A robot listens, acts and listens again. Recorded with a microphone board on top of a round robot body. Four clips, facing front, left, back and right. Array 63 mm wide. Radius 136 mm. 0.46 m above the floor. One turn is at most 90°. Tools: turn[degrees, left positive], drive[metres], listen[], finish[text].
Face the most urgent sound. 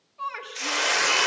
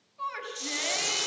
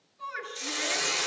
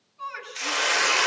Thought: The shout: 20° left.
Action: turn[20]
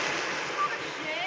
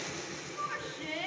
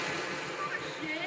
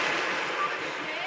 Action: finish[Facing the shout, over 4 m away.]